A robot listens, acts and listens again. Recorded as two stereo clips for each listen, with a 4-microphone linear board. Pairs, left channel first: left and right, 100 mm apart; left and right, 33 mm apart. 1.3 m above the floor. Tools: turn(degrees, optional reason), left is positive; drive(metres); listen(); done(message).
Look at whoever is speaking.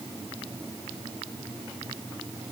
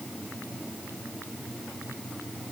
listen()
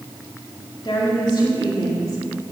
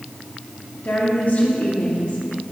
turn(degrees=40, reason="The woman speaking: about 40° left or 140° left.")
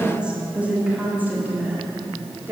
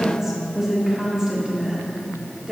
turn(degrees=-20, reason="So it is at 20° right.")
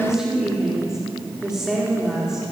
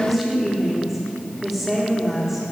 done("Facing the woman speaking, 2 to 4 m away.")